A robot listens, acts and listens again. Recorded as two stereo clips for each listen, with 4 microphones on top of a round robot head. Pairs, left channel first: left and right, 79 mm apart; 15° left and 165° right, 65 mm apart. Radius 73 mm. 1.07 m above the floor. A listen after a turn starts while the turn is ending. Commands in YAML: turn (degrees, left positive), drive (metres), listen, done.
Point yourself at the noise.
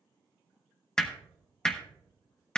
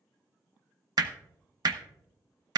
turn: 170
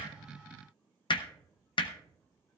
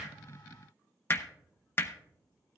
turn: 70
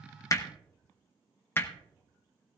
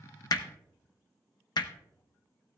turn: 30
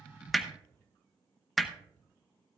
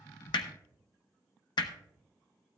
done: "Found it: hammering, straight ahead, under 1 m away."